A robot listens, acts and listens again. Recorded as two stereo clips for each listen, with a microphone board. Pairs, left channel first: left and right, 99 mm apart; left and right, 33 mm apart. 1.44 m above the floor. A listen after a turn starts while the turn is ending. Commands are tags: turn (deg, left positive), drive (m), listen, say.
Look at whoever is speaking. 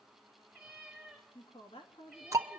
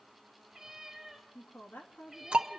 <turn deg="70"/>
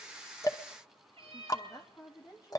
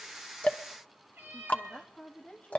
<turn deg="40"/>
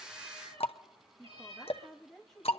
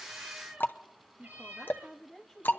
<say>Found it: a woman speaking, straight ahead.</say>